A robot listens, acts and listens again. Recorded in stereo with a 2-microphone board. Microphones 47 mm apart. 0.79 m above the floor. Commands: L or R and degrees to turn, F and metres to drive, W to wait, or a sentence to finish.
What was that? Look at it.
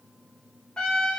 L20
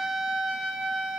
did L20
Found it: a trumpet, straight ahead.